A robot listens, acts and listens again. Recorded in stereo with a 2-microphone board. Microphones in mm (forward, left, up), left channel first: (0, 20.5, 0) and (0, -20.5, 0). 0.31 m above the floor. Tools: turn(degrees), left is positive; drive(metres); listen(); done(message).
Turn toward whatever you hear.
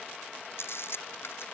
turn(degrees=65)
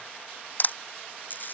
turn(degrees=45)
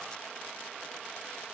listen()
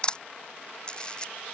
turn(degrees=25)
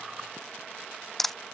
done("Found it: a camera shutter, straight ahead.")